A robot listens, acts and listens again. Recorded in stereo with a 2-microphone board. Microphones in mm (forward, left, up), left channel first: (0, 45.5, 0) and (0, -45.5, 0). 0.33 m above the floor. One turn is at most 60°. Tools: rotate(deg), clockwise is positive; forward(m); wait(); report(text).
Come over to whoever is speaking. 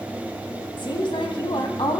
rotate(-60)
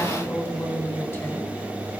rotate(-30)
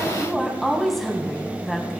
forward(1.0)
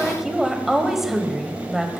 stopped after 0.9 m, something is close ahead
report("I am next to the woman speaking.")